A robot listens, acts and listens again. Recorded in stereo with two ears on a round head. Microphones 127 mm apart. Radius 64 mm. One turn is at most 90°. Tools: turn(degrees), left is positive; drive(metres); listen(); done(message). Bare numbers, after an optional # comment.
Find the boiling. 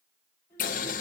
# The boiling: about 60° left or 120° left.
turn(60)
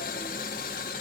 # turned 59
# So it is at 60° left.
turn(60)
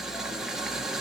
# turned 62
done("Facing the boiling.")